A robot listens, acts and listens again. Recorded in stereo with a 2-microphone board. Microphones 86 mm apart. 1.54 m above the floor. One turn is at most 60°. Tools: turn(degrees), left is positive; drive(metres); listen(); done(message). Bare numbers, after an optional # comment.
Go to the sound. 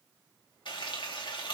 # The frying: about 65° left or 115° left.
turn(60)
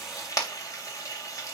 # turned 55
# So it is at 45° left.
turn(45)
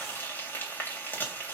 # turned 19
# The frying is now 25° left.
turn(25)
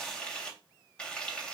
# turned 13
# The frying is now 10° left.
turn(10)
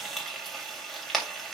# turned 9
drive(1.0)
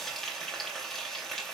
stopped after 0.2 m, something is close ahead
done("Something is in my way. I am facing the frying but have not reached it.")